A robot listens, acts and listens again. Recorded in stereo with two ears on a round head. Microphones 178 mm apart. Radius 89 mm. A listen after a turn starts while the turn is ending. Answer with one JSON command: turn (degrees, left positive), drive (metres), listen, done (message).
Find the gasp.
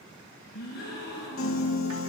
{"turn": 55}
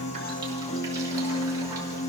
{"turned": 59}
{"listen": true}
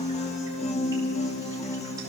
{"done": "I heard a gasp, but can't make it out now. It was about 5° right or 65° left."}